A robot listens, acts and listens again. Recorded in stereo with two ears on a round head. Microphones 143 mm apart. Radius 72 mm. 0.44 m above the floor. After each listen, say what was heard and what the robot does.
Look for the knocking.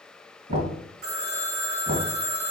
The knocking: about 45° right or 135° right. Turn 45° right.
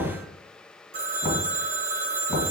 Facing the knocking.